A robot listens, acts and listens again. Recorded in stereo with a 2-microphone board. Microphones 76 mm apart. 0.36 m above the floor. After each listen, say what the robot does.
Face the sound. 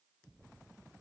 Keep listening.
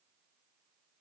Keep listening.
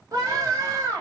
Turn 55° right.
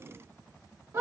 Turn 50° right.
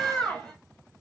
Turn 10° left.
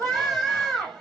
Found it: a scream, straight ahead.